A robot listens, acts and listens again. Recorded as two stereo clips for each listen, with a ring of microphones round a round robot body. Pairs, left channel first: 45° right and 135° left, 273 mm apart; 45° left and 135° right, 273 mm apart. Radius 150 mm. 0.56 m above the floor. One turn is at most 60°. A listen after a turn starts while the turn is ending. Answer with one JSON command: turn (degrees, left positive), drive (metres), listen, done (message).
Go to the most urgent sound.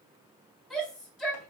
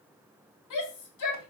{"turn": 45}
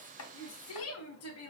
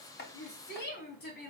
{"drive": 1.0}
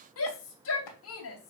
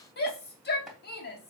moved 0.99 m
{"drive": 1.0}
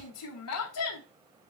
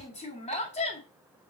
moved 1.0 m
{"turn": -20}
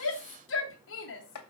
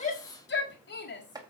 {"drive": 1.0}
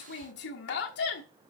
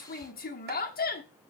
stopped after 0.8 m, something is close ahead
{"done": "I am next to the shout."}